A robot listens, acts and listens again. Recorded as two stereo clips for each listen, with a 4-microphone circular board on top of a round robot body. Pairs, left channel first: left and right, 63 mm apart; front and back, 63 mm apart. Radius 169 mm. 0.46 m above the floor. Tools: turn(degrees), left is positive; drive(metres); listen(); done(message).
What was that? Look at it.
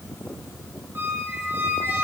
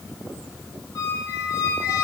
turn(degrees=-35)
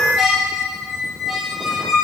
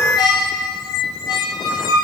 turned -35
done("Facing the squeak.")